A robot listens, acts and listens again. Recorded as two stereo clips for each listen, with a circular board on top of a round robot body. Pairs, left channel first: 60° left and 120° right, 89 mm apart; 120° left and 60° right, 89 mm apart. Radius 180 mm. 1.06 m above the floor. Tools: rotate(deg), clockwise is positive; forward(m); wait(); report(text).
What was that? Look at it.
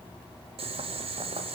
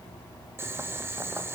rotate(125)
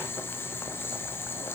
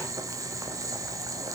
report("Found it: boiling, straight ahead.")